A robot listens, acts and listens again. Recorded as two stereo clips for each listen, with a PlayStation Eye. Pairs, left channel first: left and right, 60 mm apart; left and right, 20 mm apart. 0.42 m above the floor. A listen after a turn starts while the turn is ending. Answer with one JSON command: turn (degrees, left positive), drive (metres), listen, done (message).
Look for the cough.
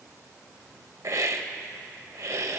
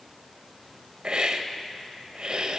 {"listen": true}
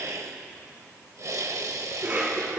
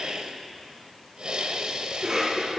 {"turn": -25}
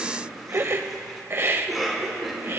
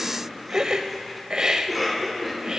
{"done": "Found it: a cough, straight ahead, 2 to 4 m away."}